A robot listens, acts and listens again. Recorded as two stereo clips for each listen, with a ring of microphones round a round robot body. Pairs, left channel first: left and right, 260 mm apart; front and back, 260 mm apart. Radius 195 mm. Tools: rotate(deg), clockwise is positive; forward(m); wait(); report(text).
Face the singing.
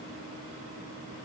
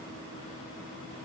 wait()
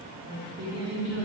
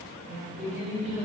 rotate(95)
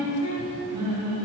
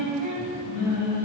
rotate(15)
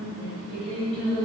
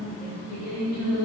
report("Facing the singing, over 4 m away.")